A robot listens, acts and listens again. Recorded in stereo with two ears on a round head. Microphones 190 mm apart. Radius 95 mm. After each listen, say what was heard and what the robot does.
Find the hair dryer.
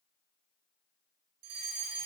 Keep listening.
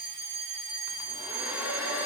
Turn 30° right.
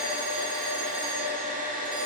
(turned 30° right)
So it is at 140° right. Turn 140° right.
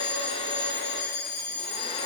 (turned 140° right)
The hair dryer is now 30° left. Turn 30° left.
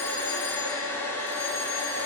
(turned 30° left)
The hair dryer is now 10° left. Turn 10° left.
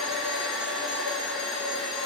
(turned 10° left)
Facing the hair dryer, 1 to 2 m away.